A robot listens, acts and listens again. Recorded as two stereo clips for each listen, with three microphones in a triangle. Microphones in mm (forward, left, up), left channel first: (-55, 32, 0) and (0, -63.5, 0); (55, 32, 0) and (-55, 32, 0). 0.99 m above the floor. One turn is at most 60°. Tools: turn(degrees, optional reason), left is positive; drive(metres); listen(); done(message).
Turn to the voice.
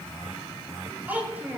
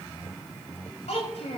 turn(degrees=15, reason="The child speaking: 15° left.")
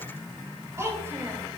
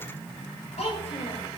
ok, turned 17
done("Facing the child speaking.")